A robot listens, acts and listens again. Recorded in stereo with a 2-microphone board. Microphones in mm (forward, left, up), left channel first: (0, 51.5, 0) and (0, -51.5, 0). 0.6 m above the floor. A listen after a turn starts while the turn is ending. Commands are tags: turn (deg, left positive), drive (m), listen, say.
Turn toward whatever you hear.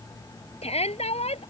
<turn deg="90"/>
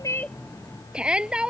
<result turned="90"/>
<turn deg="-10"/>
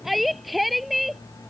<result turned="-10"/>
<say>Found it: a shout, straight ahead.</say>